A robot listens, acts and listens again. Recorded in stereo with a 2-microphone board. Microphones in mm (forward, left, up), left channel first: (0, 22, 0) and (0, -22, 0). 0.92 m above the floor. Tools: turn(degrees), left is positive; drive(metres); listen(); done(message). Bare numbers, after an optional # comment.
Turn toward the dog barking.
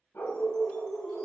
# The dog barking: about 50° left or 130° left.
turn(50)
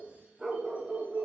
# So it is at 15° right.
turn(-15)
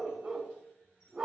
# The dog barking is now 25° right.
turn(-25)
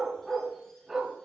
# The dog barking is now 15° right.
turn(-15)
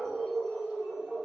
# The dog barking is now 20° right.
turn(-20)
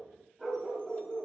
done("Facing the dog barking, 2 to 4 m away.")